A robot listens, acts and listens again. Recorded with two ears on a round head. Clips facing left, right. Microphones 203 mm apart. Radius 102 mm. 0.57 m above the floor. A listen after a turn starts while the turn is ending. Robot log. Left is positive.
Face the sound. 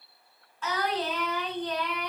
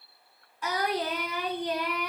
cmd yaw -30
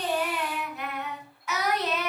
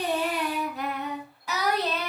note: So it is at 150° right.
cmd yaw -150
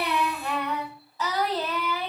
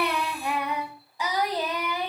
note: The singing is now 15° right.
cmd yaw -15
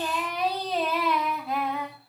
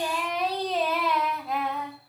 end: Facing the singing.